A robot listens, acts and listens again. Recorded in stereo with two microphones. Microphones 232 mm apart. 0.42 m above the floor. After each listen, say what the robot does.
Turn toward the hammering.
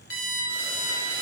Keep listening.
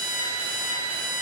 Keep listening.
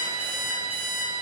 I can't make out hammering, only an alarm clock.